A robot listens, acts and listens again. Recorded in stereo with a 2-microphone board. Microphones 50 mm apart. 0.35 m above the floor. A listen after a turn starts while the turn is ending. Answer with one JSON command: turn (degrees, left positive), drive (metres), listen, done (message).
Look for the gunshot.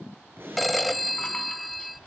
{"turn": -50}
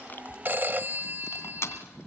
{"listen": true}
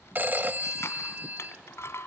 {"done": "I heard a gunshot, but can't make it out now. It was about straight ahead or 80° right."}